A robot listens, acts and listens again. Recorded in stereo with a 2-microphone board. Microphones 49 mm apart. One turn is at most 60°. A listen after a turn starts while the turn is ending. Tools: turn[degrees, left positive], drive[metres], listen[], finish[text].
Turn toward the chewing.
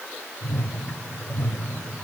Action: listen[]
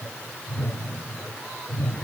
Action: listen[]
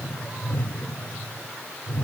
Action: finish[I can't make out chewing, only a whoosh.]